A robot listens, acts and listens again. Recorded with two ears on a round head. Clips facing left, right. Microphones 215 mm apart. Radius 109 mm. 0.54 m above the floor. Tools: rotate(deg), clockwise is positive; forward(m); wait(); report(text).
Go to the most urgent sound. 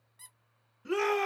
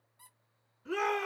rotate(-55)
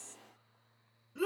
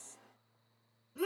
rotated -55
rotate(-20)
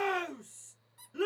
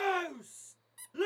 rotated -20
forward(1.0)
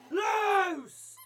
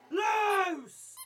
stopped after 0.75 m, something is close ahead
rotate(-10)
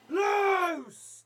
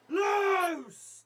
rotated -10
report("I am next to the shout.")